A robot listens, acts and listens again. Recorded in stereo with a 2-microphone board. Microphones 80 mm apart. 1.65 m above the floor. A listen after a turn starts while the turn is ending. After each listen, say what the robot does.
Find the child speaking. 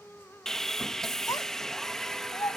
Turn 55° left.
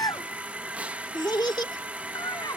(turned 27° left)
Turn 110° left.
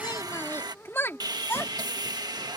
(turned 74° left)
Turn 35° left.
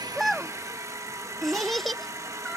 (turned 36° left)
Found it: a child speaking, straight ahead.